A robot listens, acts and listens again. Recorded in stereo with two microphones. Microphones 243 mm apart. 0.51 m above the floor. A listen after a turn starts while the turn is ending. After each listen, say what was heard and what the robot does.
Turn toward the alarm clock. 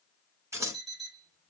The alarm clock: about 25° left or 155° left. Turn 25° left.
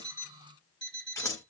So it is at 130° left. Turn 130° left.
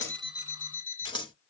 The alarm clock is now 20° right. Turn 20° right.
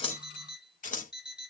Found it: an alarm clock, straight ahead, 1 to 2 m away.